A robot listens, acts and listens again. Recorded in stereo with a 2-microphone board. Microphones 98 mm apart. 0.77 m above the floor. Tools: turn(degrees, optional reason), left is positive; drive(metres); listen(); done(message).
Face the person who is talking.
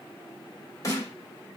listen()
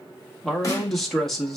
turn(degrees=30)
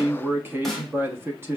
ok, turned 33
turn(degrees=-30, reason="So it is at 30° right.")
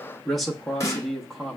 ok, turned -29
done("Facing the man speaking, 1 to 2 m away.")